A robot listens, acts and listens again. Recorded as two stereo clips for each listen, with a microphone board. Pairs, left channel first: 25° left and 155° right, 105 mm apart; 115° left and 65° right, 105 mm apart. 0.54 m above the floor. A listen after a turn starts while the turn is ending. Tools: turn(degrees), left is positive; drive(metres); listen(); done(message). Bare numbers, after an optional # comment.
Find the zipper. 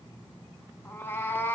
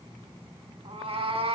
listen()
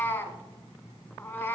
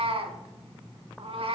listen()
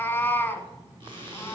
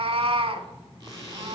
# The zipper: 115° right.
turn(-115)
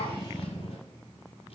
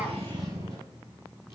listen()
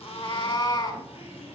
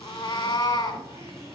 listen()
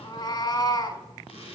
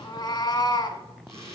done("Found it: a zipper, straight ahead, 2 to 4 m away.")